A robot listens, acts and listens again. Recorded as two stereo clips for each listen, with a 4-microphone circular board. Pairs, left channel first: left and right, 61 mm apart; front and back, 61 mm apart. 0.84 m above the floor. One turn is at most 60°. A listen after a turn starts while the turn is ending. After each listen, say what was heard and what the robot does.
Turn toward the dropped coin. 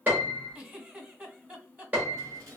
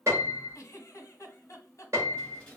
The dropped coin: 70° right. Turn 60° right.
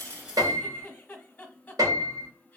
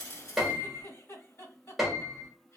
Nothing new. It was at 10° right. Turn 10° right.
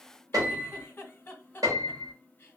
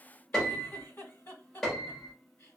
Facing where the dropped coin came from. I can't hear it now.